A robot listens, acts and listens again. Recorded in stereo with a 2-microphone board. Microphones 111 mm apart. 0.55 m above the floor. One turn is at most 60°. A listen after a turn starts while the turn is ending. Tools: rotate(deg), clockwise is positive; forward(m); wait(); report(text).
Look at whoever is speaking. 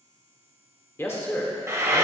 rotate(-20)
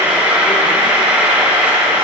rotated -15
wait()
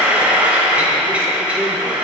wait()
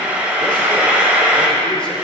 report("I heard a man speaking, but can't make it out now. It was about 5° left or 145° left.")